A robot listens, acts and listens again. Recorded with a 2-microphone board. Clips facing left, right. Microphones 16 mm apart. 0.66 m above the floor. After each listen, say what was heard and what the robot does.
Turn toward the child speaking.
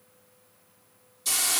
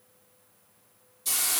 Keep listening.
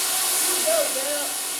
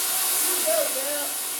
Turn 30° left.
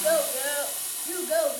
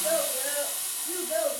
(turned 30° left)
So it is at 130° left. Turn 130° left.
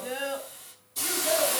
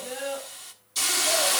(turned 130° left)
The child speaking is now 20° left. Turn 20° left.
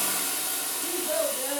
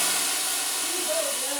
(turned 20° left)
Found it: a child speaking, straight ahead.